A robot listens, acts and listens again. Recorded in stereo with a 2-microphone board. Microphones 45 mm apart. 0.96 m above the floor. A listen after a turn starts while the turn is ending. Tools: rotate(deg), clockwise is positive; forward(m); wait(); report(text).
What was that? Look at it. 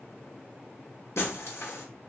rotate(-90)
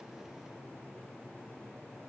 report("I heard breaking glass from this way, but can't make it out now.")